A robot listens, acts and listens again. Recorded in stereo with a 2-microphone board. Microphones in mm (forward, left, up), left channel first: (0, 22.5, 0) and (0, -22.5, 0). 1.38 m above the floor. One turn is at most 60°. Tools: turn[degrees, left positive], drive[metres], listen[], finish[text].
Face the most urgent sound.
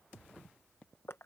Action: listen[]
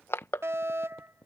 Action: turn[-60]
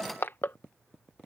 Thought: Nothing new. It was at 30° right.
Action: turn[-30]
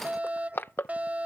Thought: The fire alarm is now 35° right.
Action: turn[-35]
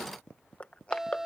Thought: The fire alarm is now 10° right.
Action: turn[-10]
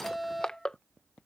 Action: finish[Facing the fire alarm.]